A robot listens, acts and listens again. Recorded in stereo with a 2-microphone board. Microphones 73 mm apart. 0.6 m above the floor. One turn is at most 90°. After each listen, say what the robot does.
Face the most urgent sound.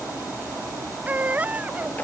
Turn 20° right.
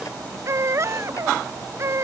Turn 90° right.
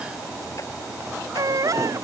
Turn 55° right.
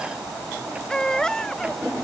Turn 10° left.
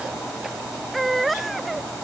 Found it: a baby crying, straight ahead.